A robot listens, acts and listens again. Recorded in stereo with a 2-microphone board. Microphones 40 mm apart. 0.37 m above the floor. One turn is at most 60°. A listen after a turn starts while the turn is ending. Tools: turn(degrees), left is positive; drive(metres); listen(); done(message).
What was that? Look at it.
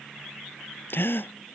turn(degrees=60)
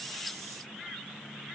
listen()
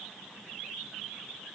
done("I heard a gasp, but can't make it out now. It was about straight ahead or 60° left.")